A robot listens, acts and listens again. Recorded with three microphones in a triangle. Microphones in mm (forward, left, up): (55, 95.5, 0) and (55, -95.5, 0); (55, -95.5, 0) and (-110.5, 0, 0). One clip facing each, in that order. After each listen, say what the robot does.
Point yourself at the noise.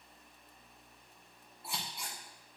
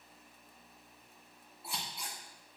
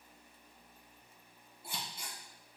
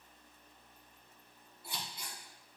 Found it: scissors, straight ahead.